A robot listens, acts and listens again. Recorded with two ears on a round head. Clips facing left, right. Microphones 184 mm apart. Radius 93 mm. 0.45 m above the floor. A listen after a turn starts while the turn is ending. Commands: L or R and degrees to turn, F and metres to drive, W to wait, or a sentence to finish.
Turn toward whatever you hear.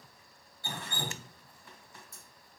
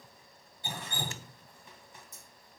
R20
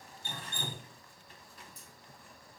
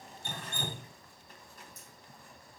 R140
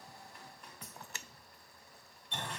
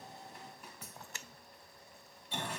Found it: dripping, straight ahead, 2 to 4 m away.